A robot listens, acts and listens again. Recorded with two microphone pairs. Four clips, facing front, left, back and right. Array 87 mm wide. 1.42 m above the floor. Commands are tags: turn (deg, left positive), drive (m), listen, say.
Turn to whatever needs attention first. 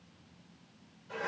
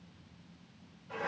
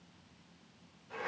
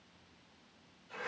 <listen/>
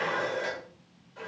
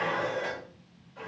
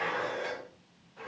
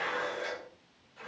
<listen/>
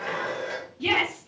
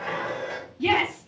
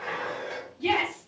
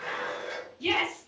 <turn deg="85"/>
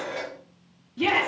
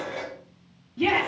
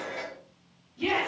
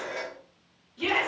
<turn deg="25"/>
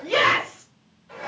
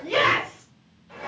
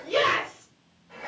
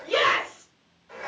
<turn deg="20"/>
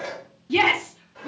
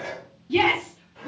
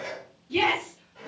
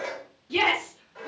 <say>Facing the shout, 1 to 2 m away.</say>